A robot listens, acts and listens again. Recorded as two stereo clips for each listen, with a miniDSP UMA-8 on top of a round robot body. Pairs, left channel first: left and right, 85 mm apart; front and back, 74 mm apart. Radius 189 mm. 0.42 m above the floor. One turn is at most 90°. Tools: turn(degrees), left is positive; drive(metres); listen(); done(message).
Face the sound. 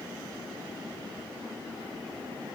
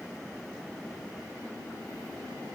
listen()
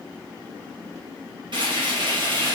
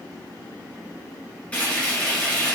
turn(degrees=-70)
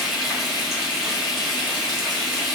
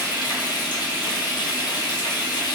done("Facing the frying.")